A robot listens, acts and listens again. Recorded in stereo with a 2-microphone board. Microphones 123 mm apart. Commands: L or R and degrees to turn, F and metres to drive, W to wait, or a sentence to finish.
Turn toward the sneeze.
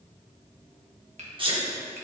R45
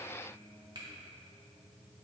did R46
W
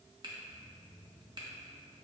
I heard a sneeze, but can't make it out now. It was about straight ahead or 90° right.